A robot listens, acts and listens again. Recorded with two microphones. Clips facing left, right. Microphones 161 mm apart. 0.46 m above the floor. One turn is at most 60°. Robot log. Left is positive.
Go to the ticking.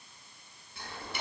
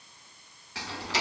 cmd yaw -60
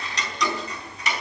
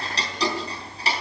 note: So it is at 30° right.
cmd yaw -30
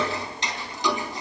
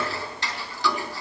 note: The ticking is now 20° left.
cmd yaw +20
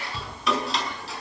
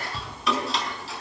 cmd fwd 1.0
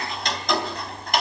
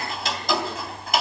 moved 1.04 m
cmd fwd 1.0
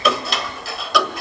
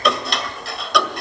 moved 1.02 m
cmd fwd 1.0
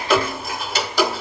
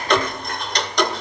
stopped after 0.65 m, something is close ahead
end: I am next to the ticking.